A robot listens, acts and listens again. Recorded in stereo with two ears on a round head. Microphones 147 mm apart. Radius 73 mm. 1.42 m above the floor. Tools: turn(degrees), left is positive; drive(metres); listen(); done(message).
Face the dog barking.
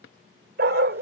turn(degrees=-60)
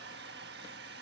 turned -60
listen()
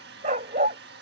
turn(degrees=-45)
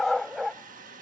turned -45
done("Facing the dog barking.")